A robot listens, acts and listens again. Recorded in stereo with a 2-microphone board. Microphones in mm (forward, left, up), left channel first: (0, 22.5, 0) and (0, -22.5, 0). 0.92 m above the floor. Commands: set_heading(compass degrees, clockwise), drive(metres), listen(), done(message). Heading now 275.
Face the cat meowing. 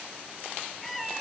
set_heading(245)
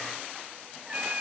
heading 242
set_heading(272)
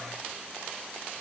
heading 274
listen()
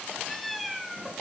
done("Found it: a cat meowing, straight ahead, 2 to 4 m away.")